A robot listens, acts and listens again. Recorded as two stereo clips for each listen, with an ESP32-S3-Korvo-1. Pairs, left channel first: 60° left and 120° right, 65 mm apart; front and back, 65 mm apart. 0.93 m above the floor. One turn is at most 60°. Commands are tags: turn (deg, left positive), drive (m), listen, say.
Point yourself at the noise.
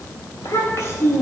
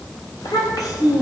<turn deg="15"/>
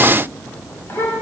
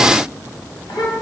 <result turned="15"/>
<say>Facing the child speaking.</say>